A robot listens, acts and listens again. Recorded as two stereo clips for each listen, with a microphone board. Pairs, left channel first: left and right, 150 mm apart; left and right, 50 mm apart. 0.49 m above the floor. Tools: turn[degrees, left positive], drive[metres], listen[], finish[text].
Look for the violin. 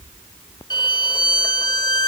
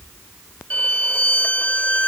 Thought: The violin: about 30° left or 150° left.
Action: turn[30]
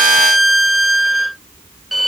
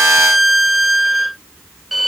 Action: finish[Found it: a violin, straight ahead.]